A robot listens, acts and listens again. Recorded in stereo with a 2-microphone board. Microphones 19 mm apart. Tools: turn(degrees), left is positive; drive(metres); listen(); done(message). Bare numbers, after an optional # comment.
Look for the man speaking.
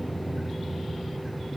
listen()
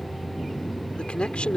# The man speaking: about 70° left or 110° left.
turn(70)
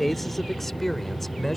# So it is at 15° left.
turn(15)
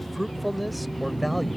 done("Facing the man speaking.")